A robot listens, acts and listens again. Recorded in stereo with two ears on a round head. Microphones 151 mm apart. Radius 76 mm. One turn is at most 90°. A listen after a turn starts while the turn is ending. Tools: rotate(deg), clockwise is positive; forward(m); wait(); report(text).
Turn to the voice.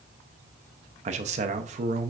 rotate(40)
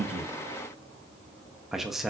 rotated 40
report("Found it: a man speaking, straight ahead.")